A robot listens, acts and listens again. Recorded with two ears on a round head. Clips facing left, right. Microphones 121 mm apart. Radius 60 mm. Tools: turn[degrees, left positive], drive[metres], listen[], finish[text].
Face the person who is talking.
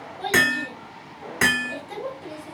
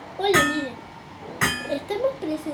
Thought: The child speaking: about 65° right or 115° right.
Action: turn[-65]
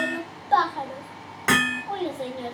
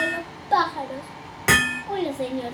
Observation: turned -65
Thought: So it is at 15° right.
Action: turn[-15]
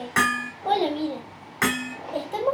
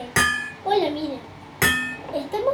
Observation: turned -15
Action: finish[Found it: a child speaking, straight ahead, 1 to 2 m away.]